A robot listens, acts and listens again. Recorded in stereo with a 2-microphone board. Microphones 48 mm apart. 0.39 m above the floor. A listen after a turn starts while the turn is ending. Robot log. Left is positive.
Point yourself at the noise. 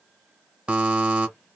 note: The buzzer: about 25° right or 155° right.
cmd yaw -25
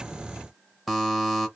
end: Found it: a buzzer, straight ahead, under 1 m away.